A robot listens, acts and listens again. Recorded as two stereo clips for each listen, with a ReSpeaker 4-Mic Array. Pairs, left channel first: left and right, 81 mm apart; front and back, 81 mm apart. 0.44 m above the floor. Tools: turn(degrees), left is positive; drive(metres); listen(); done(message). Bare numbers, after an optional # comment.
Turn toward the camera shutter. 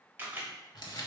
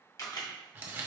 # The camera shutter: 30° right.
turn(-30)
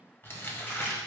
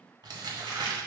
listen()
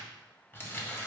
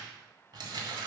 listen()
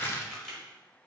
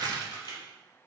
# The camera shutter is now 10° left.
turn(10)
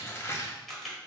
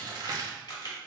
done("Facing the camera shutter, 1 to 2 m away.")